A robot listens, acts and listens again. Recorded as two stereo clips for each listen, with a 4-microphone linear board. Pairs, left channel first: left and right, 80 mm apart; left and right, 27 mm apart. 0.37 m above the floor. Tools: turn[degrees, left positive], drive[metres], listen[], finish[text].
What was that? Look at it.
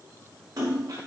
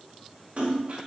Thought: The splash: about 50° right or 130° right.
Action: turn[-50]
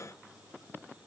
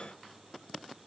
Action: listen[]
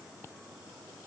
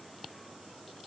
Action: finish[I heard a splash, but can't make it out now. It was about straight ahead or 80° right.]